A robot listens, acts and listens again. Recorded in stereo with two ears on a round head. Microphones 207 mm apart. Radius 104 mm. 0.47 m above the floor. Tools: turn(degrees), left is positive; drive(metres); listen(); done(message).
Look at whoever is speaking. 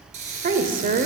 turn(degrees=-35)
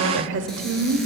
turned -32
turn(degrees=-105)
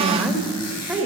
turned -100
done("Facing the woman speaking, 1 to 2 m away.")